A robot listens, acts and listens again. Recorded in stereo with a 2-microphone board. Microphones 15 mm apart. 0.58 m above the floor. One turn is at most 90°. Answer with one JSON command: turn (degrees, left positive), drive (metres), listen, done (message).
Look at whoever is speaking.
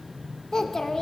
{"turn": 40}
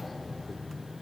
{"listen": true}
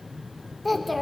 {"done": "Facing the child speaking, under 1 m away."}